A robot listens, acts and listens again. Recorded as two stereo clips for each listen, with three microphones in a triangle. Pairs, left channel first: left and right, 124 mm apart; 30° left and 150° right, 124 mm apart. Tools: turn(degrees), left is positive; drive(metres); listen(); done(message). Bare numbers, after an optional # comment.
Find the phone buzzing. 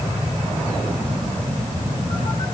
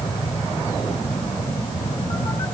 listen()
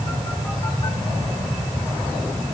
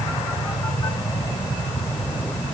listen()
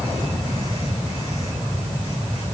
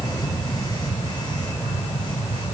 done("I can't make out a phone buzzing to turn to.")